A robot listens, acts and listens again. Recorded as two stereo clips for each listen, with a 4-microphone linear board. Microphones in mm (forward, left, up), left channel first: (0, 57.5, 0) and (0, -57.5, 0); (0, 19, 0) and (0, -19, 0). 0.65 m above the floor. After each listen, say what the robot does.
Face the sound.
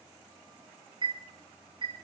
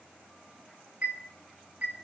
Turn 45° right.
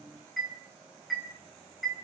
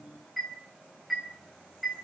Facing the chime.